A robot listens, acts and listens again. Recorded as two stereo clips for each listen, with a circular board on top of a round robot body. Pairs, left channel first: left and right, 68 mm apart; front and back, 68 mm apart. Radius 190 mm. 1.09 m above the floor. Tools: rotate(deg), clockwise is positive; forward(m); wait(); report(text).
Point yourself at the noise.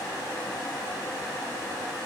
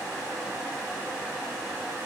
wait()
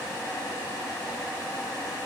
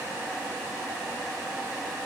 wait()
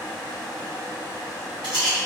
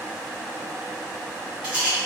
rotate(105)
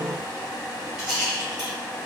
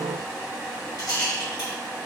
rotate(10)
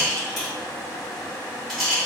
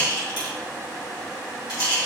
report("Facing the rattle.")